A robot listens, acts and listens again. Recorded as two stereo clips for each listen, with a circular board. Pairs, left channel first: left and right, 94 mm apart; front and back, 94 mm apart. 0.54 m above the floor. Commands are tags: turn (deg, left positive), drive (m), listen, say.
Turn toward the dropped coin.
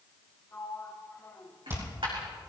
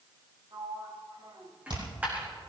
<turn deg="-105"/>
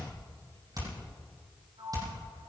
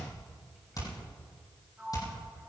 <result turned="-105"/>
<say>I heard a dropped coin from this way, but can't make it out now.</say>